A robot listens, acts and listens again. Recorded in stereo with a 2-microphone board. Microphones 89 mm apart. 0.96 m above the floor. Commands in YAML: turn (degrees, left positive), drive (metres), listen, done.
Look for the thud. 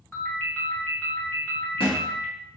turn: 90
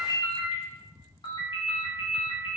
done: "Facing where the thud came from. I can't hear it now."